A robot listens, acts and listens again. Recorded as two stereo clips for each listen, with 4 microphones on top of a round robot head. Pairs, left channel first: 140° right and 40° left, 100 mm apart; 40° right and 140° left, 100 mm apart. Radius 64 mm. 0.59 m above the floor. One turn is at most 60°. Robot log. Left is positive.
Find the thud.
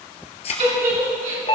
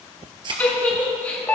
note: The thud: 175° right.
cmd yaw -60
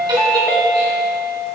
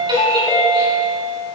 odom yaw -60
note: Nothing new. It was at 115° right.
cmd yaw -60
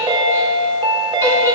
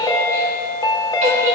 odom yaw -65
note: Nothing new. It was at 50° right.
cmd yaw -50
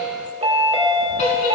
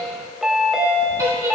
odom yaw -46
end: I heard a thud from this way, but can't make it out now.